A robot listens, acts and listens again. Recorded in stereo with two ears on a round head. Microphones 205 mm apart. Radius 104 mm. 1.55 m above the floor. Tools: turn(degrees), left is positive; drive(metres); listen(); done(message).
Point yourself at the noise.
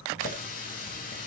turn(degrees=35)
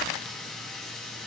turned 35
done("Found it: a running tap, straight ahead.")